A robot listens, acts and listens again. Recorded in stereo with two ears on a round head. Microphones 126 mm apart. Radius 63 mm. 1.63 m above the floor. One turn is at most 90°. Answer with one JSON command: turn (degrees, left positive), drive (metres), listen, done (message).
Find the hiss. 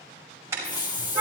{"turn": 30}
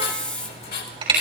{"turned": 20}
{"turn": 10}
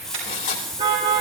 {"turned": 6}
{"done": "Found it: a hiss, straight ahead, 1 to 2 m away."}